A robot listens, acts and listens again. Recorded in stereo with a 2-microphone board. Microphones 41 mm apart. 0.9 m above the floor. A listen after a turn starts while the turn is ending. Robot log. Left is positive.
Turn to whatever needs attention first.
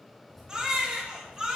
note: The baby crying: about 15° right or 165° right.
cmd yaw -15
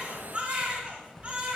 note: So it is at 150° right.
cmd yaw -150
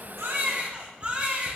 note: The baby crying is now 35° right.
cmd yaw -35
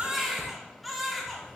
end: Found it: a baby crying, straight ahead.